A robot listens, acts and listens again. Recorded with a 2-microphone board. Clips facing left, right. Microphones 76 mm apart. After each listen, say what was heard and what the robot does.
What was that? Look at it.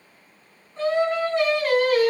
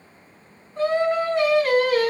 Turn 30° left.
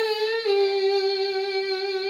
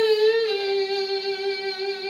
So it is at 130° left. Turn 130° left.
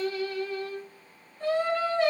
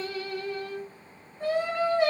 The singing is now 15° right. Turn 15° right.
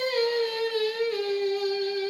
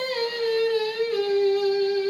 Facing the singing, 2 to 4 m away.